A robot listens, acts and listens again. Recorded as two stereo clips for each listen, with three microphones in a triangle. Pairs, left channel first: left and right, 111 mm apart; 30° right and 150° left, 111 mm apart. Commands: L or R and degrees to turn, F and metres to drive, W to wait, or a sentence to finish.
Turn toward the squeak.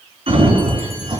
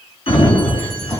W
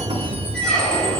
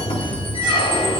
Found it: a squeak, straight ahead.